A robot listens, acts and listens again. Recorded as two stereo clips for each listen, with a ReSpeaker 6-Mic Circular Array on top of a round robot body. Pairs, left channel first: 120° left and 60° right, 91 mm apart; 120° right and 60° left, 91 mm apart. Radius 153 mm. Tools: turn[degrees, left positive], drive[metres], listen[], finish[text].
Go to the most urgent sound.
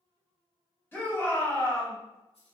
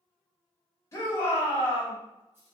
Thought: The shout: 175° right.
Action: turn[-175]
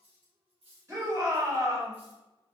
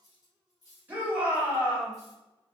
Thought: The shout is now 10° right.
Action: turn[-10]
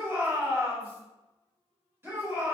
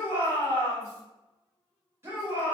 Action: drive[1.0]
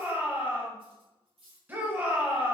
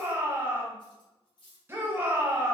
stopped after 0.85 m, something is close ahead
Action: finish[I am next to the shout.]